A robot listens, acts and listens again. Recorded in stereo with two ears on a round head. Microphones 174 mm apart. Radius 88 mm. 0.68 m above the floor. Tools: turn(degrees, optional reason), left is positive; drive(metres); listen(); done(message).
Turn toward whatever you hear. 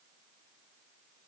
listen()
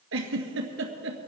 turn(degrees=-75, reason="The giggle: about 75° right or 105° right.")
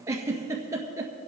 turn(degrees=-15, reason="So it is at 15° right.")
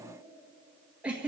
turn(degrees=-10, reason="The giggle is now 10° right.")
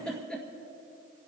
done("Found it: a giggle, straight ahead.")